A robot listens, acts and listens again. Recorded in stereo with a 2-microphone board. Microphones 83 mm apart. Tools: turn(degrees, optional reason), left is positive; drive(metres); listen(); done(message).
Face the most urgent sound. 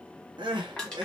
turn(degrees=-75, reason="The crying: about 75° right or 105° right.")
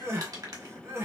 turn(degrees=-35, reason="So it is at 35° right.")
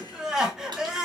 done("Found it: crying, straight ahead, under 1 m away.")